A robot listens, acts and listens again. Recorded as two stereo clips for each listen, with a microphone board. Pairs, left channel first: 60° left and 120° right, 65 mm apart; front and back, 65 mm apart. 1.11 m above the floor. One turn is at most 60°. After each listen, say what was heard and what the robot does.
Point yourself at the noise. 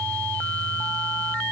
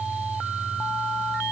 Keep listening.
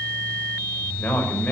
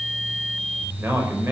The man speaking: 125° left. Turn 60° left.
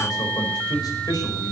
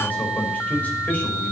The man speaking is now 65° left. Turn 60° left.
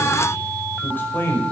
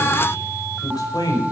Facing the man speaking, over 4 m away.